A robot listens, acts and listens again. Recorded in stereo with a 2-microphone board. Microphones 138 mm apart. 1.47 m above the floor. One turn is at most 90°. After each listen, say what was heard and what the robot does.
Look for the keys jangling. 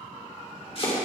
Keep listening.
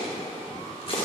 Keep listening.
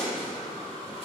I can't make out keys jangling to turn to.